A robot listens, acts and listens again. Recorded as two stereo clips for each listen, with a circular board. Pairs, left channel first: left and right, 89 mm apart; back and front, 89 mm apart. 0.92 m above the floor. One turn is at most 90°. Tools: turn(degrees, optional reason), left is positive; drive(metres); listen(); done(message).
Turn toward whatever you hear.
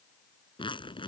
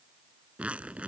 turn(degrees=75, reason="The zipper: 75° left.")
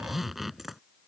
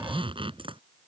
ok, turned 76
done("Facing the zipper.")